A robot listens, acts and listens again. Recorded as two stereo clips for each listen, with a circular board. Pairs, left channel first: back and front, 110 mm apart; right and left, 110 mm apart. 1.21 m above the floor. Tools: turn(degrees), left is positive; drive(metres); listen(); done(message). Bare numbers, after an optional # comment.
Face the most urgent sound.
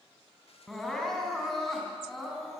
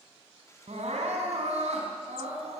# The crying: 95° left.
turn(95)
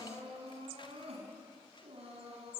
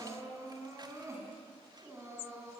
# The crying is now 25° left.
turn(25)
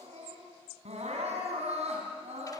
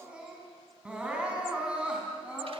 # The crying is now 10° left.
turn(10)
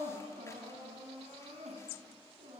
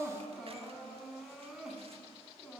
done("Facing the crying.")